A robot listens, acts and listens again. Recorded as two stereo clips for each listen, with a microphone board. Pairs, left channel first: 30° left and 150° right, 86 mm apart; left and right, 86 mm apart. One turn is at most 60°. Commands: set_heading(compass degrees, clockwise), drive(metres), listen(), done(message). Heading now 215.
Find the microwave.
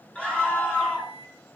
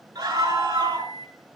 set_heading(155)
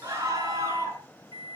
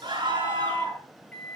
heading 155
set_heading(135)
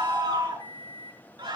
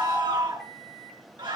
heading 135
done("Facing the microwave.")